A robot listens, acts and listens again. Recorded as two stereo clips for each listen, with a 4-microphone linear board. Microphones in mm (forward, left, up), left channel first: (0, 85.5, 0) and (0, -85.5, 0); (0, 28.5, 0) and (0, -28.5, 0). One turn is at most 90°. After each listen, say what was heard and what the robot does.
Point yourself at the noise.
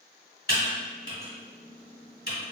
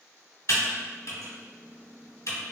The typing on a keyboard: about 75° left or 105° left. Turn 75° left.
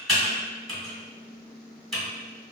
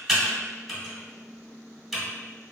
Found it: typing on a keyboard, straight ahead.